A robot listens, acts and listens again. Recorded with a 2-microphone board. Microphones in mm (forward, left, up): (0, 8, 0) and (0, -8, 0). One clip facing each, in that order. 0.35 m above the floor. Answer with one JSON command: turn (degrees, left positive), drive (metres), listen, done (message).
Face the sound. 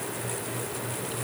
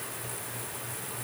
{"listen": true}
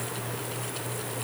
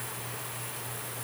{"listen": true}
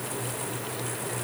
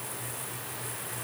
{"done": "I can't make out anything."}